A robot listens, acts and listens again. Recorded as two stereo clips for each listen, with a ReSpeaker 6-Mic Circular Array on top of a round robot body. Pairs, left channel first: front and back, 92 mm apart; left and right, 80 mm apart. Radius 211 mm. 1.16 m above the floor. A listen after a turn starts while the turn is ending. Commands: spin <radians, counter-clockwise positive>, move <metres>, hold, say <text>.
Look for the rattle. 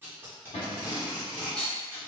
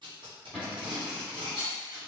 spin -1.31
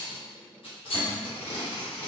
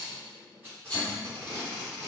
spin 0.17
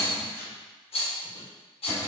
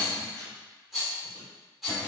say Found it: a rattle, straight ahead.